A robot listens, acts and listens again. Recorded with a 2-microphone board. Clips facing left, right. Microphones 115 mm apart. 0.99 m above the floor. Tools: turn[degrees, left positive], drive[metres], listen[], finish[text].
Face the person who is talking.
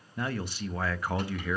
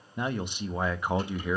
Thought: The man speaking: about 20° right or 160° right.
Action: turn[-20]
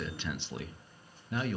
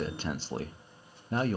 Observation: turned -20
Thought: So it is at 140° right.
Action: turn[-140]
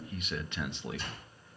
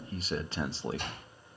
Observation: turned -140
Thought: The man speaking is now 35° right.
Action: turn[-35]
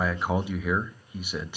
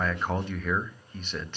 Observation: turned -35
Thought: The man speaking is now 10° left.
Action: turn[10]
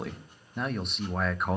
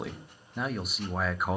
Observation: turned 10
Action: finish[Facing the man speaking, under 1 m away.]